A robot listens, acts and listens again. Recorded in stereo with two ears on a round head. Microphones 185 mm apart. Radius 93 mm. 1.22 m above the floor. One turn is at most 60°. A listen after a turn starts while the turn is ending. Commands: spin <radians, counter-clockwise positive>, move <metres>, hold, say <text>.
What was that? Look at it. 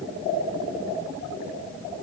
hold
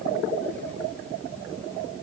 hold
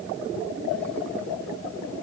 say I can't make out anything to turn to.